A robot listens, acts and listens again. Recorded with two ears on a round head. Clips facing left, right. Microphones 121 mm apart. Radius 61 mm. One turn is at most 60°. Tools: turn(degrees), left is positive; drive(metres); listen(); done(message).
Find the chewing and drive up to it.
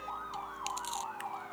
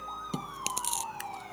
turn(degrees=-60)
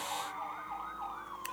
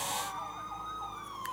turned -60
listen()
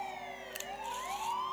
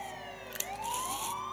turn(degrees=-55)
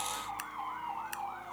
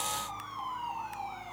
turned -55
listen()
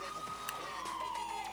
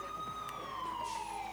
listen()
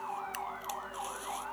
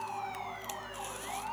done("Facing where the chewing came from. I can't hear it now. I did not reach it.")